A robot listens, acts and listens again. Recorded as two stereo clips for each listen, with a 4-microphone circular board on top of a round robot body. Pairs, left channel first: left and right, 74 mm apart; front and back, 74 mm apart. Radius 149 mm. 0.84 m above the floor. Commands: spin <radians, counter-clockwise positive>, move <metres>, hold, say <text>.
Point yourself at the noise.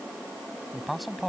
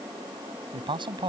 spin 3.14
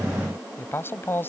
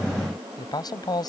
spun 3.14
spin 0.52
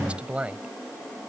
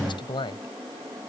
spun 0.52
spin -0.26
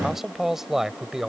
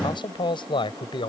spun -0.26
say Facing the man speaking.